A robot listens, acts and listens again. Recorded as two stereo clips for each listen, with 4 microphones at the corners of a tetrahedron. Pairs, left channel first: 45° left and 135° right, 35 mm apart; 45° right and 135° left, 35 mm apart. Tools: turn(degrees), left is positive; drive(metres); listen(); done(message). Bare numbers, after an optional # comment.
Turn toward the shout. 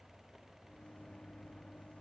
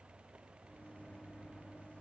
listen()
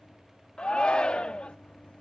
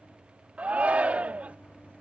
# The shout: 100° left.
turn(100)
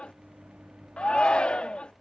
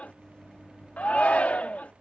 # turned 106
done("Found it: a shout, straight ahead.")